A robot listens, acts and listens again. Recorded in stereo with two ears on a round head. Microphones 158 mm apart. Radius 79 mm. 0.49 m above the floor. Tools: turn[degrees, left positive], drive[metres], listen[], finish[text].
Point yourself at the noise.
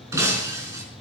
Thought: The breaking glass: about 15° right or 165° right.
Action: turn[-15]
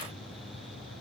Action: listen[]
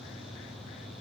Action: finish[I heard breaking glass, but can't make it out now. It was about straight ahead or 150° right.]